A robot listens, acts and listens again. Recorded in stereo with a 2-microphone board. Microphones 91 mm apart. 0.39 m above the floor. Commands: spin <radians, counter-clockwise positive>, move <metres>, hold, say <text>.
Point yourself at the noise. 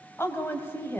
spin 0.35
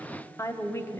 spin 0.52
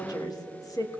spin 2.44
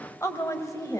spin 0.70
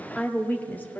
spin 0.35
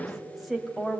say Facing the woman speaking, 1 to 2 m away.